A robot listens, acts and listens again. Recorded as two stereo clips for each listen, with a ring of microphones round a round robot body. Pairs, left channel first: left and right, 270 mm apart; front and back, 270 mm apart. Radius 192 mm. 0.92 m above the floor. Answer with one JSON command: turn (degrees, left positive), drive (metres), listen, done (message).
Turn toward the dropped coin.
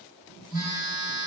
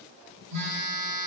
{"listen": true}
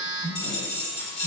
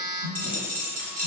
{"turn": 125}
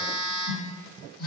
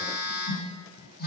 {"done": "Facing where the dropped coin came from. I can't hear it now."}